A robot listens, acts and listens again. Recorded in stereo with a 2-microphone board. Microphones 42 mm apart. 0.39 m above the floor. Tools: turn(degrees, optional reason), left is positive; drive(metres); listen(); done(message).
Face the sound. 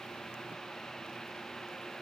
listen()
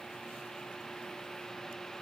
listen()
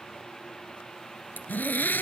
turn(degrees=45, reason="The zipper: about 45° left or 135° left.")
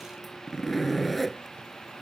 done("Found it: a zipper, straight ahead.")